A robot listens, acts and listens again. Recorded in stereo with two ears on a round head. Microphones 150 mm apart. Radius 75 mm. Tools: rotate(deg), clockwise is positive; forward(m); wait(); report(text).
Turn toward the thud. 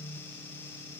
wait()
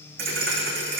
rotate(60)
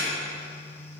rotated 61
wait()
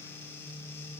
report("I heard a thud, but can't make it out now. It was about straight ahead or 60° right.")